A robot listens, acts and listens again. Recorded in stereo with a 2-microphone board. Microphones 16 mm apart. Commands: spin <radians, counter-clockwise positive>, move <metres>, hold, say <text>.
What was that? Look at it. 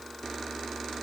hold
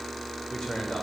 spin 1.05
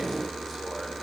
hold
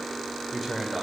say Found it: a man speaking, straight ahead, over 4 m away.